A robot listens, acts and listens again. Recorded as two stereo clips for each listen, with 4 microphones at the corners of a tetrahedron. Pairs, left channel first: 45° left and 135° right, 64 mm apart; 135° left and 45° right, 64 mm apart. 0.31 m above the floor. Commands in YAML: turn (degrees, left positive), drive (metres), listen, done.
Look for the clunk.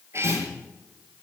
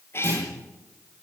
turn: -95
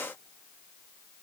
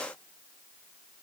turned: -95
done: "I heard a clunk from this way, but can't make it out now."